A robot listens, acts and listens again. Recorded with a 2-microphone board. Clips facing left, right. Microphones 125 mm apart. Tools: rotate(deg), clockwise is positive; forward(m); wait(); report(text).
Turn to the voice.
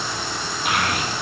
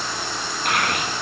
rotate(-30)
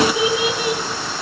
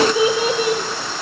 rotate(40)
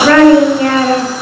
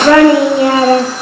rotate(25)
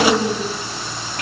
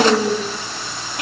report("Found it: a child speaking, straight ahead, 2 to 4 m away.")